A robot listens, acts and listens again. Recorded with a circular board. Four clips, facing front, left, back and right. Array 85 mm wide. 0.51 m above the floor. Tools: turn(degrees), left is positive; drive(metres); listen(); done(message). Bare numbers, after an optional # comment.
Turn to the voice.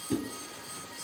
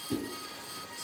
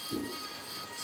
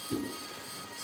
listen()
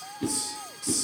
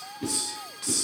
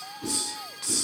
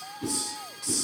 listen()
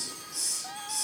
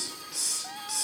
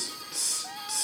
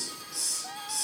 done("I can't make out anyone speaking to turn to.")